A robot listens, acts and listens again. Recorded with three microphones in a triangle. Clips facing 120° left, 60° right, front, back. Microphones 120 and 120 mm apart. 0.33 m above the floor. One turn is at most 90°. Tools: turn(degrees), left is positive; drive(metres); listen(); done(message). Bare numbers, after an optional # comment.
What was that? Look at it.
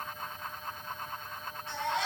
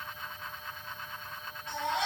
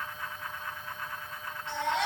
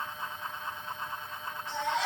done("Found it: a baby crying, straight ahead.")